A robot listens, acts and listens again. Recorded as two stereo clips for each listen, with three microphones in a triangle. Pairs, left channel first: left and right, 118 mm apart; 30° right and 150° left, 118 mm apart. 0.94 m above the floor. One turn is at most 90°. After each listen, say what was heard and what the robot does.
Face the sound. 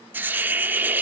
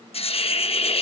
The hiss: 20° right. Turn 20° right.
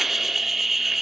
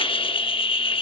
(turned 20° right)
Found it: a hiss, straight ahead.